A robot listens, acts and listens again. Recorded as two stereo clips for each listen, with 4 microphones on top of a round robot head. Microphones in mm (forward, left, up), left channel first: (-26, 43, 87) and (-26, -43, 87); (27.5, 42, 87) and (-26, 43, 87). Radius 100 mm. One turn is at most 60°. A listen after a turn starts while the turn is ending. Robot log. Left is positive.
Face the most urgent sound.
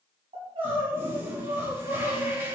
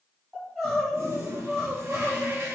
note: The crying: 95° right.
cmd yaw -60
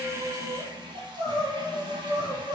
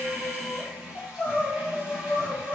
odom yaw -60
note: The crying is now 50° right.
cmd yaw -50
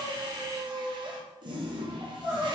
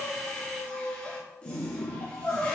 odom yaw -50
note: The crying is now 10° right.
cmd yaw -10
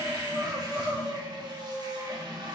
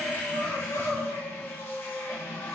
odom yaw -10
end: Facing the crying.